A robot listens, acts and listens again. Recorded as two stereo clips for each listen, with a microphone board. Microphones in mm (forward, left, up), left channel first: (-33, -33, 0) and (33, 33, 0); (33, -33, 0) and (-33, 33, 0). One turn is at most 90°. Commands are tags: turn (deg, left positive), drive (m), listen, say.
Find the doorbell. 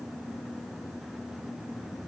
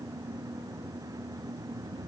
<listen/>
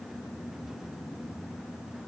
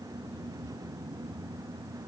<listen/>
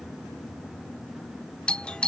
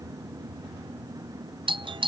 <turn deg="90"/>
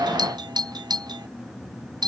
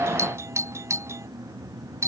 <turn deg="80"/>
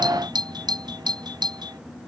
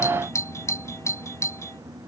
<turn deg="15"/>
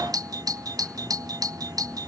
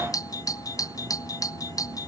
<say>Found it: a doorbell, straight ahead.</say>